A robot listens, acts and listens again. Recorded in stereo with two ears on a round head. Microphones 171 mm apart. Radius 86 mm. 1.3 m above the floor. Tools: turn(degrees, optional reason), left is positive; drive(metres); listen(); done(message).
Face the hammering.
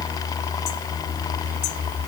listen()
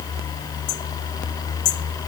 listen()
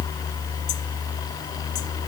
done("I can't make out hammering.")